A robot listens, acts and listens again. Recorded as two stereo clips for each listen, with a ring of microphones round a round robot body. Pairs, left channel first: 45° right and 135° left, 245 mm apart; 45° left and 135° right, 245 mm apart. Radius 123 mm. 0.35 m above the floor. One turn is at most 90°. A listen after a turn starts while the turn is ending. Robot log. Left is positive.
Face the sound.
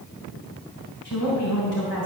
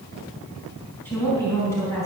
note: The woman speaking: 30° right.
cmd yaw -30
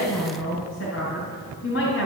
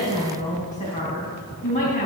note: The woman speaking is now 10° right.
cmd yaw -10
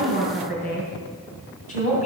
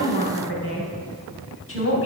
note: The woman speaking is now 15° left.
cmd yaw +15
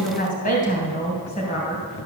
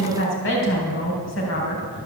note: The woman speaking is now 15° left.
cmd yaw +15
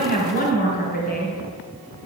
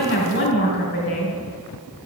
end: Found it: a woman speaking, straight ahead.